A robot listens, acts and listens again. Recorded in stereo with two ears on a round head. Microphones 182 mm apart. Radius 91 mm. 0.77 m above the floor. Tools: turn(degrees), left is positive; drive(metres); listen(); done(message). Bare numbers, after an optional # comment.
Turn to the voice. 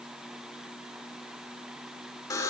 listen()
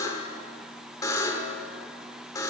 listen()
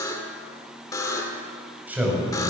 turn(-30)
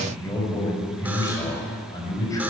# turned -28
# So it is at 15° left.
turn(15)
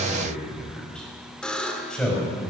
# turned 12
done("Facing the man speaking.")